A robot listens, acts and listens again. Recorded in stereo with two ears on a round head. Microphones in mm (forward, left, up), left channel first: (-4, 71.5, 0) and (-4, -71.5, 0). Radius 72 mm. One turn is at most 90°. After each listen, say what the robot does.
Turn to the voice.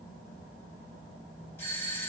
Keep listening.
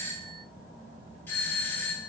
Keep listening.
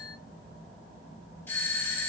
I can't make out anyone speaking to turn to.